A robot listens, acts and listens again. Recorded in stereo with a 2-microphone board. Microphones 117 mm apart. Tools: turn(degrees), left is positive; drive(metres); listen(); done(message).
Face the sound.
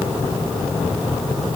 listen()
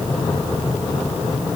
listen()
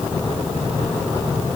done("I can't make out anything.")